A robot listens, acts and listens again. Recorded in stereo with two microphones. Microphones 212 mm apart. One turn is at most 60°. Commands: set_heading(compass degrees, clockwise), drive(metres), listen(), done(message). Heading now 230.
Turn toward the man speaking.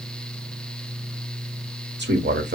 set_heading(280)
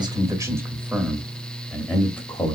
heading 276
set_heading(261)
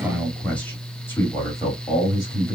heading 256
set_heading(241)
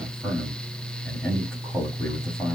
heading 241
done("Found it: a man speaking, straight ahead, 1 to 2 m away.")